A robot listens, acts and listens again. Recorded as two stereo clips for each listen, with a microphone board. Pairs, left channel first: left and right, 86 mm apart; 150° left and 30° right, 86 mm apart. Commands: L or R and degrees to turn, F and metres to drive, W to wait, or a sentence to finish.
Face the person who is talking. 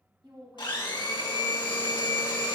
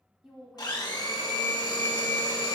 R115
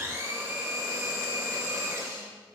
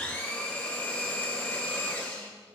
W
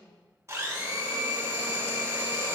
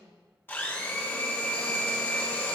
R15
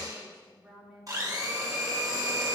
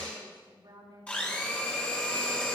Facing the woman speaking.